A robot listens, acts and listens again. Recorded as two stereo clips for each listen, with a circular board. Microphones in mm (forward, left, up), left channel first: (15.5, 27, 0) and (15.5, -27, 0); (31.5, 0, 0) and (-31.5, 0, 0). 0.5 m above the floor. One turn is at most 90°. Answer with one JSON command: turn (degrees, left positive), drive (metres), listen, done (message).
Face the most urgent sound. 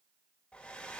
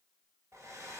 {"listen": true}
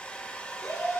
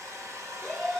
{"turn": 90}
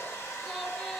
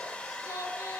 {"turn": 15}
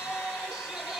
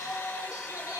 {"done": "Facing the shout, 2 to 4 m away."}